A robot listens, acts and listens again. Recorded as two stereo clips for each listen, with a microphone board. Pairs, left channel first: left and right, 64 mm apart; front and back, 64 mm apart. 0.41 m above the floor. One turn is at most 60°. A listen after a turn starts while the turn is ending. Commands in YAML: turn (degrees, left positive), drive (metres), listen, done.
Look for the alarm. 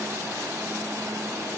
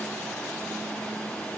listen: true
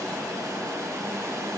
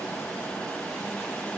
listen: true
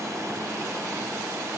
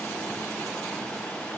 done: "I can't make out an alarm to turn to."